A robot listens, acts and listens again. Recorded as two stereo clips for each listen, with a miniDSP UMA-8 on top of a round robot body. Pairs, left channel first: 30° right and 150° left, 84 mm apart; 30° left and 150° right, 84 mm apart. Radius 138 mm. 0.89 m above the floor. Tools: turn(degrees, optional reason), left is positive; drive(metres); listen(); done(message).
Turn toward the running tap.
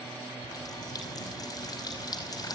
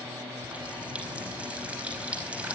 turn(degrees=-75, reason="The running tap: 75° right.")
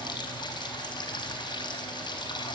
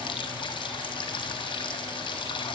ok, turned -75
done("Found it: a running tap, straight ahead.")